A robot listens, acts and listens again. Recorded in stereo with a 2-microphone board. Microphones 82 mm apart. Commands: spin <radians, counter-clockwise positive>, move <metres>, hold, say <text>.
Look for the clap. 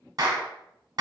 spin -0.87
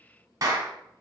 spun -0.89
spin -1.05
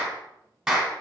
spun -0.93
say Found it: a clap, straight ahead.